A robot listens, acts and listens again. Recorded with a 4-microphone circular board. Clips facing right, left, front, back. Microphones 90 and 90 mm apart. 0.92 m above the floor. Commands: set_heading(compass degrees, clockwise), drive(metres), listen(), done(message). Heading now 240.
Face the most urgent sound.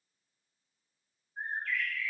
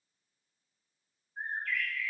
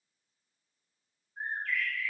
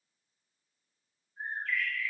listen()
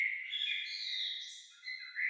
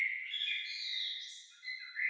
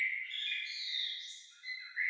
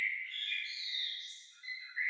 listen()
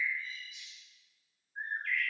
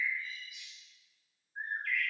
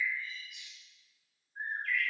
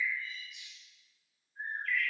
done("I can't make out anything urgent to turn to.")